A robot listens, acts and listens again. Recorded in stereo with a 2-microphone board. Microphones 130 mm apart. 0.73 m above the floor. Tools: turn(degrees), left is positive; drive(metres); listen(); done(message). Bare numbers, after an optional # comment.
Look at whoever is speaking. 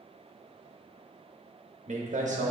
# The man speaking: about 65° right or 115° right.
turn(-65)
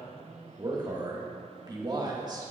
# So it is at 35° right.
turn(-35)
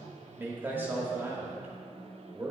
# The man speaking is now 15° right.
turn(-15)
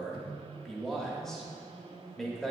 done("Facing the man speaking.")